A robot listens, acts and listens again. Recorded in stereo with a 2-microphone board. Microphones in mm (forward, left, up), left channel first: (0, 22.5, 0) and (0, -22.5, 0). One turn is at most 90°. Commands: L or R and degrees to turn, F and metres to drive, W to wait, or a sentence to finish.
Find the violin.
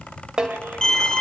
L30
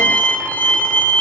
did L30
L90
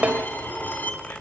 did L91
L50
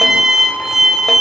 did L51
Facing the violin.